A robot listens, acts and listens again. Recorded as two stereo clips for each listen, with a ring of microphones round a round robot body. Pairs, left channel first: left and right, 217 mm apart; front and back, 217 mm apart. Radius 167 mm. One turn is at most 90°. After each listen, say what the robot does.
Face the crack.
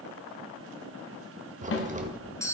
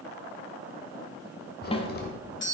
Turn 40° right.
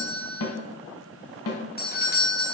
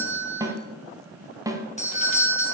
I heard a crack from this way, but can't make it out now.